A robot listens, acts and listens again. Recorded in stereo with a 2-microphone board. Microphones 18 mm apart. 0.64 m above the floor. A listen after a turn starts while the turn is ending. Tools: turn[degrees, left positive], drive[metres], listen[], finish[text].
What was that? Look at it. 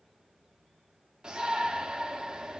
Thought: The shout: about 45° right or 135° right.
Action: turn[-45]
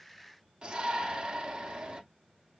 Thought: So it is at 80° right.
Action: turn[-80]
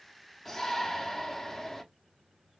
Thought: The shout is now 15° left.
Action: turn[15]
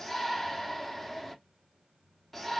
Action: finish[Facing the shout, 1 to 2 m away.]